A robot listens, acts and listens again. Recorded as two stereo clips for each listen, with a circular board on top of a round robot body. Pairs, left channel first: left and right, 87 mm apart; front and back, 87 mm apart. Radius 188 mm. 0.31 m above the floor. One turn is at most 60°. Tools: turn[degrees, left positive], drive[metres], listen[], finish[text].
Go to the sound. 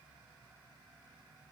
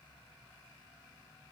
Action: listen[]
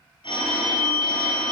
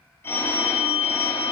Thought: The phone ringing: 65° left.
Action: turn[60]
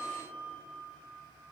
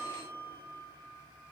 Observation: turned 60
Action: listen[]
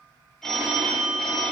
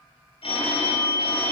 Action: drive[1.0]
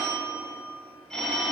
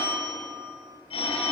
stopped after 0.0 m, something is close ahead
Action: finish[Blocked. The phone ringing is further on, straight ahead.]